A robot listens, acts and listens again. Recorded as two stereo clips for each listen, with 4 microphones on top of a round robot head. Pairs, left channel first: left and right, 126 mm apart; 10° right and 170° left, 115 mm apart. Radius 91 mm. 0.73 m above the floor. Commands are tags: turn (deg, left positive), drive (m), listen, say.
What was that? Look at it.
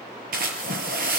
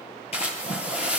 <turn deg="-65"/>
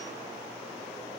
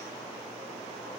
<say>Facing where the splash came from. I can't hear it now.</say>